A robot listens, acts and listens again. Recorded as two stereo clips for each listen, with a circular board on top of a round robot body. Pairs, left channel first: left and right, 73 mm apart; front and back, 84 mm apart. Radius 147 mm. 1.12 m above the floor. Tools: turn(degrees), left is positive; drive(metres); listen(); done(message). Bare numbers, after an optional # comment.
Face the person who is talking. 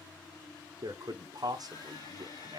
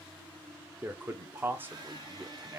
# The man speaking: 115° right.
turn(-115)
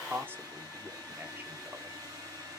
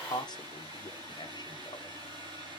# The man speaking is now 30° right.
turn(-30)
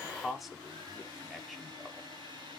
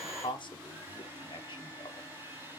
done("Found it: a man speaking, straight ahead, 1 to 2 m away.")